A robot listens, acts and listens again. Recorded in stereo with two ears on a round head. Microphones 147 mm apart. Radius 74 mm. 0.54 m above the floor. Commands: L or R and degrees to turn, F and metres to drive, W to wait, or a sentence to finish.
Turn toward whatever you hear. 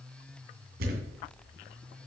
R60
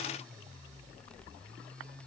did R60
W
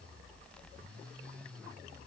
I heard a thud, but can't make it out now. It was about straight ahead or 60° right.